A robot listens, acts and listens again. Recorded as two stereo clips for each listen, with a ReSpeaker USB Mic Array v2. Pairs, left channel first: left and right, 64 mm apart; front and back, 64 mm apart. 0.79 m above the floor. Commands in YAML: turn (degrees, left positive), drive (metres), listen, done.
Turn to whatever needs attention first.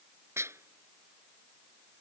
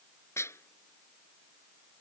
listen: true
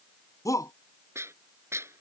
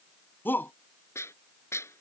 turn: 60
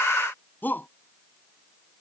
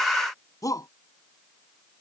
turn: 30
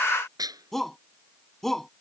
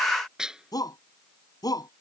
done: "Facing the shout."